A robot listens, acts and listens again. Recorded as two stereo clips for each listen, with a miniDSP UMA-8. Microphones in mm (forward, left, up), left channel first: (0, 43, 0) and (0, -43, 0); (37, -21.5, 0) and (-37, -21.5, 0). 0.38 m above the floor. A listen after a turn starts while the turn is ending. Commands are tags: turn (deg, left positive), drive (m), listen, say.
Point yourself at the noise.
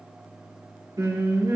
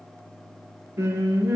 <turn deg="-125"/>
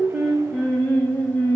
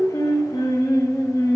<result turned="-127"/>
<turn deg="30"/>
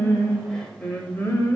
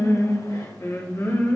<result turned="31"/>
<turn deg="40"/>
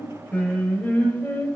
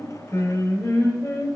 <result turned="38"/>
<turn deg="25"/>
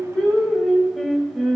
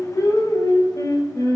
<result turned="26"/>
<say>Found it: singing, straight ahead, 1 to 2 m away.</say>